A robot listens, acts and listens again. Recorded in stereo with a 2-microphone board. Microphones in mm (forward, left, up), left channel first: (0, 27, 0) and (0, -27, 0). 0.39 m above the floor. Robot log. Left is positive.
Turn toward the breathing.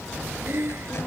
note: The breathing: about 45° right or 135° right.
cmd yaw -45
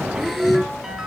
end: Facing the breathing.